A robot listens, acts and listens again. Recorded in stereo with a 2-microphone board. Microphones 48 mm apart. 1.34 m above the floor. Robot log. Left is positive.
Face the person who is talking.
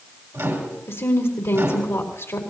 cmd yaw +90
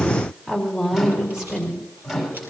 note: So it is at 10° right.
cmd yaw -10
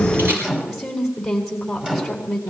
end: Facing the woman speaking, over 4 m away.